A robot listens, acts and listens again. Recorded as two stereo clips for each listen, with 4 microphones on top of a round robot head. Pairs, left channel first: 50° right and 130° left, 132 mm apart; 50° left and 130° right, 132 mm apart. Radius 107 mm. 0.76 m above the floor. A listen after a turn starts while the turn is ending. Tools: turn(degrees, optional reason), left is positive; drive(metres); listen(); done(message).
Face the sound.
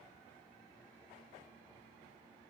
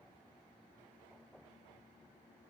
listen()
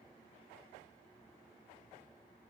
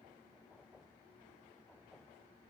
listen()
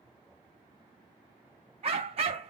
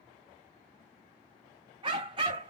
turn(degrees=175, reason="The dog barking: 175° left.")
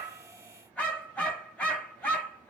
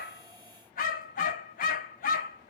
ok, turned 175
turn(degrees=30, reason="The dog barking is now 30° left.")
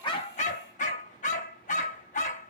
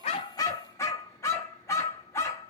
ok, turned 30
turn(degrees=-20, reason="The dog barking is now 20° right.")
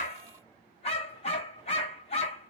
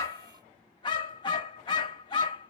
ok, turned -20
done("Facing the dog barking, under 1 m away.")